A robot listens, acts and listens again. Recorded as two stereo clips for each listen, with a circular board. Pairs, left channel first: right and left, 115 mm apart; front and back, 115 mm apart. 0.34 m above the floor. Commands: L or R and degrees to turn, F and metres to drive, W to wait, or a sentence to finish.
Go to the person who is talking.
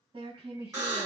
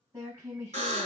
L115
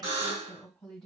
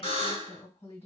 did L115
F1.0
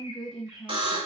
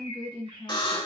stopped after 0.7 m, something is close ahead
I am next to the woman speaking.